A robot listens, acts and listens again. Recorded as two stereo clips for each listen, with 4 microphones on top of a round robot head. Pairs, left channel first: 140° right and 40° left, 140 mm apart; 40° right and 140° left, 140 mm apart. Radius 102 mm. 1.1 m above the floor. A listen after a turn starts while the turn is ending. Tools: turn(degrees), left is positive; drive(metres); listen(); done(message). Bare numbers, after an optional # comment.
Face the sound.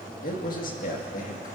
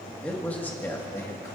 # The man speaking: 110° right.
turn(-110)
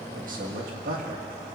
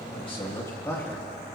# The man speaking is now 35° left.
turn(35)
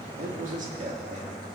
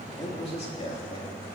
# The man speaking is now 10° left.
turn(10)
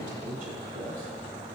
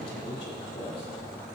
# The man speaking is now 10° left.
turn(10)
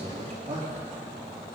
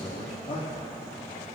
done("Facing the man speaking, 2 to 4 m away.")